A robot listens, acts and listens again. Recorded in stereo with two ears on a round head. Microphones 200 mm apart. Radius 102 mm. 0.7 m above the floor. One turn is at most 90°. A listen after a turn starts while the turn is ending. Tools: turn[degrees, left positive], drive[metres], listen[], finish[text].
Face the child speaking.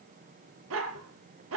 Action: listen[]
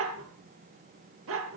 Action: listen[]
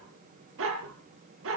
Action: finish[I can't make out a child speaking, only a dog barking.]